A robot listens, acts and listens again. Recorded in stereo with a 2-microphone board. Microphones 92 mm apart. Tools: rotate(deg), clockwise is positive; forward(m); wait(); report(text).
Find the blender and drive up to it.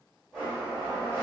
rotate(-30)
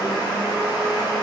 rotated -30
rotate(25)
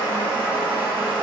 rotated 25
rotate(10)
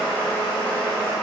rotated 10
forward(1.0)
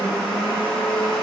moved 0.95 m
forward(1.0)
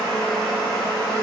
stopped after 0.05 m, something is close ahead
report("Arrived at the blender, straight ahead.")